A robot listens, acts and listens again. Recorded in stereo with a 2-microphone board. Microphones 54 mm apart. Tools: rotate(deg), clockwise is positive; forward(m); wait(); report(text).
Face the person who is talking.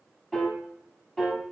wait()
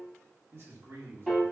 rotate(55)
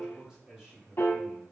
report("Found it: a man speaking, straight ahead, 1 to 2 m away.")